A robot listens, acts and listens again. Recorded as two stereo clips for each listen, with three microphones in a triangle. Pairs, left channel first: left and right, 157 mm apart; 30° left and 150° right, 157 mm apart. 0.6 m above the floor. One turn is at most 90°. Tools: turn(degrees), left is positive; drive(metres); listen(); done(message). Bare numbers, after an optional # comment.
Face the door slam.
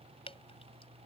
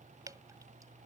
listen()
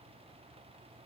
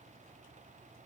listen()
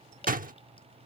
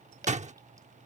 # The door slam: 110° right.
turn(-90)
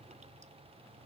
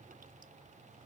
# Nothing new. It was at 20° right.
turn(-20)
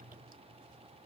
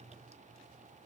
done("I heard a door slam from this way, but can't make it out now.")